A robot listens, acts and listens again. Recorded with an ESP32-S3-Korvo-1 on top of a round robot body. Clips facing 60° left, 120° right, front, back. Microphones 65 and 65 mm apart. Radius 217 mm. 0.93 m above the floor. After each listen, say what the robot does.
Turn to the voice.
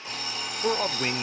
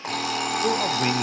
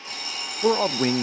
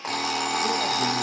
Turn 20° right.
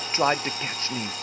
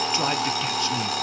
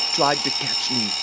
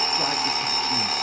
Found it: a man speaking, straight ahead, under 1 m away.